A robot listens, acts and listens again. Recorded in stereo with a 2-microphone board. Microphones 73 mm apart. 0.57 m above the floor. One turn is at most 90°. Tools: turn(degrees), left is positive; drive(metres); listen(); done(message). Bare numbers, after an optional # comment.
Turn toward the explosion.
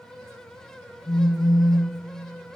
listen()
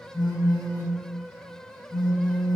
listen()
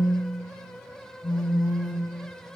done("I can't make out an explosion to turn to.")